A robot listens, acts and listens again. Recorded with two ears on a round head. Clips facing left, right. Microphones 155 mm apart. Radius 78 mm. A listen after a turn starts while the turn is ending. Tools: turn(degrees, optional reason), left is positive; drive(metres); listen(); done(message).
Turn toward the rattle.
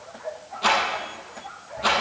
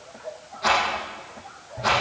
turn(degrees=40, reason="The rattle: about 40° left or 140° left.")
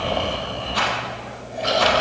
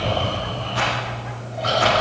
turn(degrees=100, reason="So it is at 100° left.")
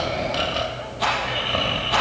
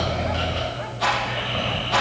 turn(degrees=20, reason="The rattle is now 20° left.")
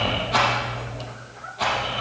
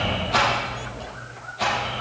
done("Found it: a rattle, straight ahead, over 4 m away.")